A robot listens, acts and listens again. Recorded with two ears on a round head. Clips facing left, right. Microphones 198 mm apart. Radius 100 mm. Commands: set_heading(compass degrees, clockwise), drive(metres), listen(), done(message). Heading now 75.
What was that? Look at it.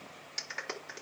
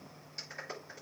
set_heading(345)
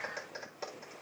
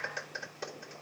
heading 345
set_heading(355)
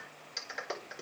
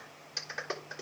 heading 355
done("Found it: a clap, straight ahead.")